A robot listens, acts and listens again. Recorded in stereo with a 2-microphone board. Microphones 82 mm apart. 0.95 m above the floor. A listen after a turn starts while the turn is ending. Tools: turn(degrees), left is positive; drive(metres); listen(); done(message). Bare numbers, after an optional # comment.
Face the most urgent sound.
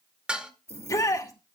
# The shout: about 45° left or 135° left.
turn(45)
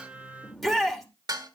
done("Found it: a shout, straight ahead.")